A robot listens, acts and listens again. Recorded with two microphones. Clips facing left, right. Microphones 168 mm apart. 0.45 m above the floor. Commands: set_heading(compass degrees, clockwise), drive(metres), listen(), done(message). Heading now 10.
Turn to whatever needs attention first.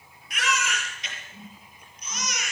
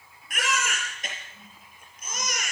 set_heading(60)
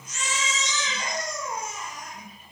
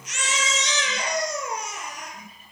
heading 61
set_heading(141)
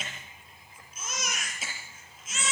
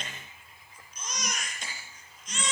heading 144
done("Facing the baby crying.")